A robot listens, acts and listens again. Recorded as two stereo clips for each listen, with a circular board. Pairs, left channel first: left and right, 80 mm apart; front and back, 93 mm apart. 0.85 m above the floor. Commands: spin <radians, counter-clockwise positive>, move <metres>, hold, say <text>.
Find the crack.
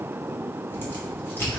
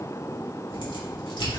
spin 0.52
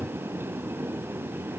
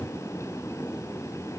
say Facing where the crack came from. I can't hear it now.